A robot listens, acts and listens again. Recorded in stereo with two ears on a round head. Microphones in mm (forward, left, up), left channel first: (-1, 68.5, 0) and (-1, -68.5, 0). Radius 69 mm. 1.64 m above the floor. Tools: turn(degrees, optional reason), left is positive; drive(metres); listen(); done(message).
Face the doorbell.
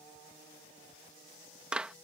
listen()
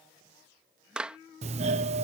turn(degrees=-45, reason="The doorbell: about 45° right or 135° right.")
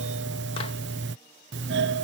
turn(degrees=-90, reason="So it is at 90° right.")
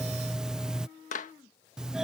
done("Found it: a doorbell, straight ahead.")